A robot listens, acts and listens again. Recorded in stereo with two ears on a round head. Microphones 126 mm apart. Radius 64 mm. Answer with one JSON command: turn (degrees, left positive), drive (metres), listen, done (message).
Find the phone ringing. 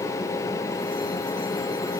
{"listen": true}
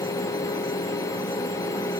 {"listen": true}
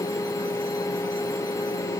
{"done": "I can't make out a phone ringing to turn to."}